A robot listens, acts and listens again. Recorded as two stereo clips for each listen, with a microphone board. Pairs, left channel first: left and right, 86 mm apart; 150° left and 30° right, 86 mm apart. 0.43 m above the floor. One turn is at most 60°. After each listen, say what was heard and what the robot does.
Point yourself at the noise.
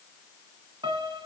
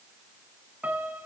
The piano: 105° right. Turn 60° right.
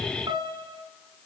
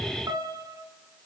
The piano is now 75° right. Turn 60° right.
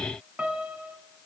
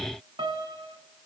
The piano is now 15° right. Turn 15° right.
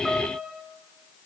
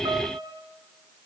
Facing the piano.